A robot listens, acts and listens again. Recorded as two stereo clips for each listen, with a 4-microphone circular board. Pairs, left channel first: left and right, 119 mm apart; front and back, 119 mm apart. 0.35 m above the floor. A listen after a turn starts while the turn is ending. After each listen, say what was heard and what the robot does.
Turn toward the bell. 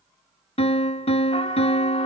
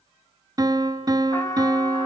Keep listening.
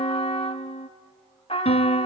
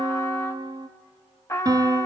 Keep listening.
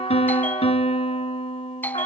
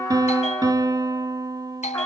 The bell: 15° left. Turn 15° left.
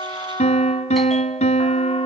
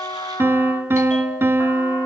Keep listening.
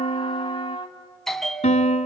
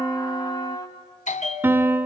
Facing the bell.